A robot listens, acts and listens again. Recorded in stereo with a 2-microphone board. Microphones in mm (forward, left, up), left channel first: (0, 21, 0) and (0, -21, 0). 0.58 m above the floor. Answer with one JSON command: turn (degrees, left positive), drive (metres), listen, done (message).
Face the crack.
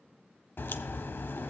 {"turn": 60}
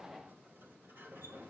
{"listen": true}
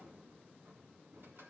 {"done": "I heard a crack, but can't make it out now. It was about straight ahead or 60° left."}